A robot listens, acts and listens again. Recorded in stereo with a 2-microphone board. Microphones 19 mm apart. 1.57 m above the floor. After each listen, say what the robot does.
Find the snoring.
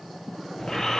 Turn 30° left.
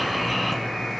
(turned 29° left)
Found it: snoring, straight ahead, 1 to 2 m away.